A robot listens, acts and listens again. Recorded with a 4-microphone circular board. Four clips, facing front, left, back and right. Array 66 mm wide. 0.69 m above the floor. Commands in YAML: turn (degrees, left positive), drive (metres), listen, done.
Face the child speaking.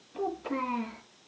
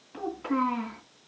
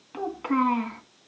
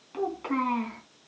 turn: -165
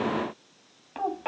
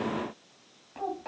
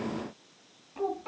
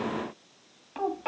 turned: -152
turn: -25
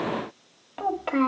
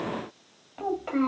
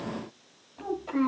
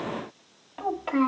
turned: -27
turn: -10
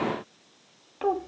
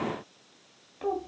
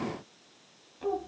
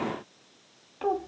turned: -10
turn: -10
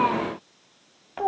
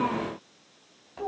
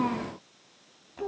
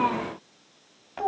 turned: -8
turn: -20
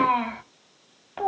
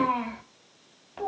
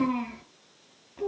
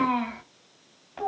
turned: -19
done: "Facing the child speaking."